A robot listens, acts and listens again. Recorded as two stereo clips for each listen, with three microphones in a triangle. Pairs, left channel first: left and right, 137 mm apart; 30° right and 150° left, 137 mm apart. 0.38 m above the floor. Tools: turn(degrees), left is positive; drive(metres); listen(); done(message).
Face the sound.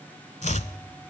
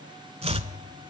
turn(degrees=115)
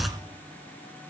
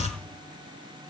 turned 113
done("Facing the chopping.")